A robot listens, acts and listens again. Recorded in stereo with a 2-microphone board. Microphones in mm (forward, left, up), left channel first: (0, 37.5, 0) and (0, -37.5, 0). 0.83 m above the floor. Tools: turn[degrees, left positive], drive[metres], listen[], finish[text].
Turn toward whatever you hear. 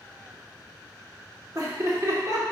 Thought: The laughter: about 50° right or 130° right.
Action: turn[-50]
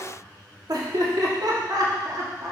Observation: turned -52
Thought: So it is at 50° right.
Action: turn[-50]
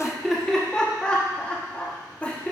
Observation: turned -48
Thought: The laughter is now 15° left.
Action: turn[15]
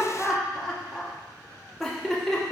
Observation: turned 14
Action: finish[Facing the laughter.]